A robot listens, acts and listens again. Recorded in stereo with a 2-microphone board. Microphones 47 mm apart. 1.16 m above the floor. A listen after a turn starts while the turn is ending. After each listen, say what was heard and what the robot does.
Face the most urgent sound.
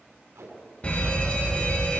The fire alarm: about 25° left or 155° left. Turn 25° left.
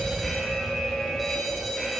Facing the fire alarm, 2 to 4 m away.